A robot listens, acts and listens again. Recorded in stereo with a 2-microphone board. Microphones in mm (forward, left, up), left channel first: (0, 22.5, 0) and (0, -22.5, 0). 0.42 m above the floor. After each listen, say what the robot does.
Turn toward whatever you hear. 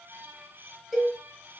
Turn 30° right.
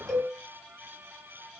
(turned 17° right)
Turn 10° left.
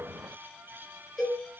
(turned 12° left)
Facing the cowbell.